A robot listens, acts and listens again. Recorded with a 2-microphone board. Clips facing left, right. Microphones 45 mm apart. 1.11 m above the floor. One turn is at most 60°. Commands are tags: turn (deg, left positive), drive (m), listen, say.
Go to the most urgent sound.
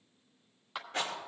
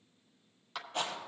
<listen/>
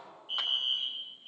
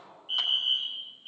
<turn deg="-45"/>
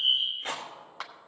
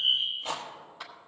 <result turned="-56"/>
<drive m="1.0"/>
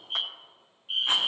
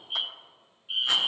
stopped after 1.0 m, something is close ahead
<turn deg="10"/>
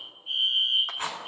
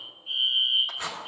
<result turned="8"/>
<say>I am next to the fire alarm.</say>